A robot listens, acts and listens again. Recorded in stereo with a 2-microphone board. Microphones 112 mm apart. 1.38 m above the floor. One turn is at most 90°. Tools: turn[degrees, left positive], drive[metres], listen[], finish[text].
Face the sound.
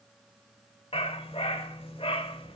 Thought: The dog barking: about 60° left or 120° left.
Action: turn[60]
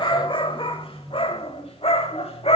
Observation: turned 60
Thought: So it is at 70° left.
Action: turn[70]
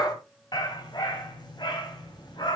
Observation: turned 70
Thought: The dog barking is now 45° left.
Action: turn[45]
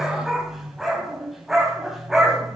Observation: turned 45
Action: finish[Facing the dog barking, 2 to 4 m away.]